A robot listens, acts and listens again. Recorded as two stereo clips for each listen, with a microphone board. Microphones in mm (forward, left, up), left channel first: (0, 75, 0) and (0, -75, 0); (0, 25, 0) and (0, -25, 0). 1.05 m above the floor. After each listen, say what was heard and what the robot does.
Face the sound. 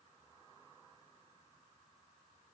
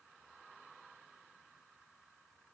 Keep listening.
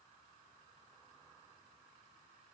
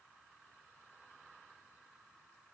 Keep listening.
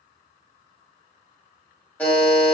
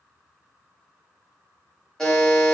Turn 30° left.
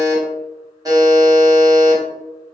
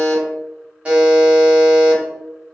So it is at 20° right. Turn 20° right.
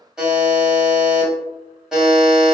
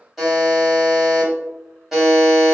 Found it: a buzzer, straight ahead, 1 to 2 m away.